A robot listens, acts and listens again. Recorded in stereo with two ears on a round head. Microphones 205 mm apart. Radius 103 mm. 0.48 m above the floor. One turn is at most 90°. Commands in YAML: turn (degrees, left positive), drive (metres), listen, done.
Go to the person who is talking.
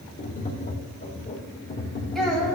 turn: 30
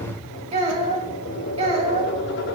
turn: -30
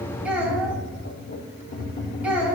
drive: 1.0
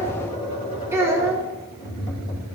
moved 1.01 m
turn: -15
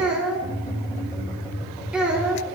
drive: 1.0
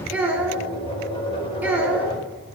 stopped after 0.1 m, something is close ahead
turn: -10
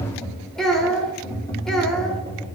done: "I am next to the child speaking."